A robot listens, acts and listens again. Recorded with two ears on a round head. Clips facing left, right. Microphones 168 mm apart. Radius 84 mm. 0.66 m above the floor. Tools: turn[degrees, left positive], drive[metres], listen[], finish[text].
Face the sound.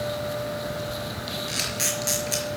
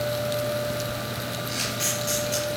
Thought: The camera shutter: about 65° left or 115° left.
Action: turn[65]
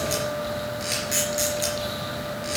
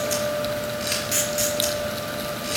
Action: finish[Found it: a camera shutter, straight ahead, over 4 m away.]